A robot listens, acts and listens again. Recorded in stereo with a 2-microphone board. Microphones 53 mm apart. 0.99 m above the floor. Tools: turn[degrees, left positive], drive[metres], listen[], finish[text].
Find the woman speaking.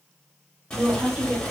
Thought: The woman speaking: about 20° right or 160° right.
Action: turn[-20]
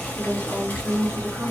Thought: So it is at 140° right.
Action: turn[-140]
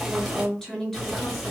Action: finish[Facing the woman speaking, 1 to 2 m away.]